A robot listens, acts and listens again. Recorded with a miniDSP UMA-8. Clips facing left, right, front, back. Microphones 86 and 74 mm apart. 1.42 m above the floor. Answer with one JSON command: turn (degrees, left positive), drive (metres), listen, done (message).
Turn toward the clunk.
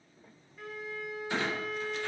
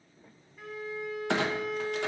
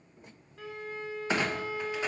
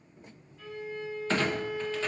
{"turn": -75}
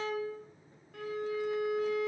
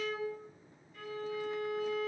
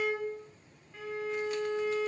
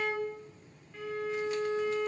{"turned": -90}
{"turn": 15}
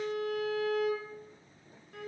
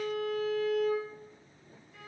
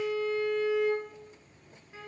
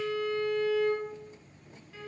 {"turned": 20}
{"done": "I heard a clunk from this way, but can't make it out now."}